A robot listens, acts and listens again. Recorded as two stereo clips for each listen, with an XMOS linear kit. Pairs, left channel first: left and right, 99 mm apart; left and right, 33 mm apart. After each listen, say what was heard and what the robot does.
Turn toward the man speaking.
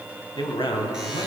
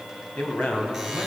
The man speaking: about 55° left or 125° left. Turn 55° left.
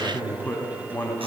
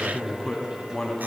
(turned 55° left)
So it is at 20° left. Turn 20° left.
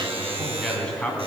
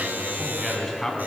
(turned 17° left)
The man speaking is now 10° left. Turn 10° left.
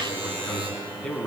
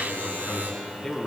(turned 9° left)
The man speaking is now 10° left. Turn 10° left.
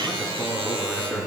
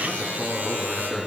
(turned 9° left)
Found it: a man speaking, straight ahead.